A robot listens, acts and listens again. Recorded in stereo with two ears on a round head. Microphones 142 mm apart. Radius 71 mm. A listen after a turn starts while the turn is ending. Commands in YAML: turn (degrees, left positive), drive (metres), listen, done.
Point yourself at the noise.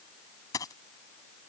turn: 25
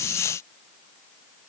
listen: true
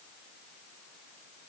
done: "I heard a dropped coin, but can't make it out now. It was about straight ahead or 130° left."